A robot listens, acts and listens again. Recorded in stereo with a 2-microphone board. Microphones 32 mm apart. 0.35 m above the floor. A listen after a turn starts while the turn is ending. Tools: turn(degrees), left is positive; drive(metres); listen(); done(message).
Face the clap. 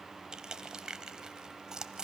listen()
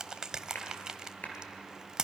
turn(degrees=60)
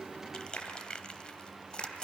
turn(degrees=65)
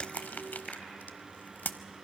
listen()
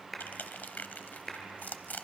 done("Found it: a clap, straight ahead.")